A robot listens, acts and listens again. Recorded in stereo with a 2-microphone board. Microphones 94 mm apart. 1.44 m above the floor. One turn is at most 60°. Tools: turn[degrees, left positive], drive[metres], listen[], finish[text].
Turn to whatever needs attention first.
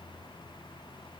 Action: listen[]
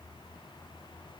Action: listen[]
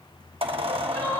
Action: turn[30]
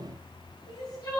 Thought: So it is at 135° left.
Action: turn[60]
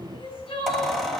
Thought: The crying is now 75° left.
Action: turn[60]
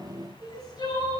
Thought: The crying is now 45° left.
Action: turn[45]
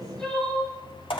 Action: finish[Found it: crying, straight ahead, over 4 m away.]